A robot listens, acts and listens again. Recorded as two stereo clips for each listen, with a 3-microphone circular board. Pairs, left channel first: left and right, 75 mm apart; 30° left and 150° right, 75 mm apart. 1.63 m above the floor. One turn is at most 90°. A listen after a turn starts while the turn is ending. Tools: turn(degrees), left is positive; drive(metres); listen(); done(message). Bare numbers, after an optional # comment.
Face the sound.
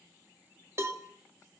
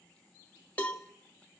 # The cowbell: 40° right.
turn(-40)
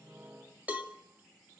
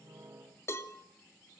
# The cowbell is now 20° right.
turn(-20)
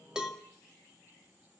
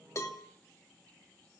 done("Facing the cowbell, 2 to 4 m away.")